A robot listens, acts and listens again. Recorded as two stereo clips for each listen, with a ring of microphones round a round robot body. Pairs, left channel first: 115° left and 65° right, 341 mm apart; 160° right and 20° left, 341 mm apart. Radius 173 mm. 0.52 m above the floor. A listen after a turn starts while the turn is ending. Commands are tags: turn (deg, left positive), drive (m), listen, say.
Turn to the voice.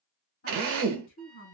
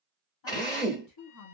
<turn deg="180"/>
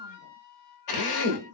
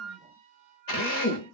<listen/>
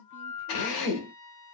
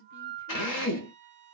<turn deg="40"/>
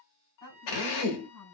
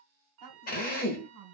<turn deg="30"/>
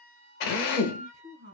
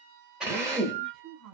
<say>Facing the woman speaking, 1 to 2 m away.</say>